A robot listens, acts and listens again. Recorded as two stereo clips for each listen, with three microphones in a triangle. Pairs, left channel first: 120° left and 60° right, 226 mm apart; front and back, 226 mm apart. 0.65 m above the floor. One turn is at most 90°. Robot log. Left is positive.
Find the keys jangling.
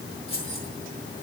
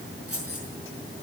note: The keys jangling: 175° right.
cmd yaw -90
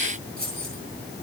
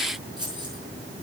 note: The keys jangling is now 110° right.
cmd yaw -90
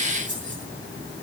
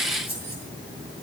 note: The keys jangling is now 25° right.
cmd yaw -25
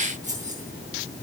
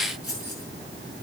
end: Facing the keys jangling, over 4 m away.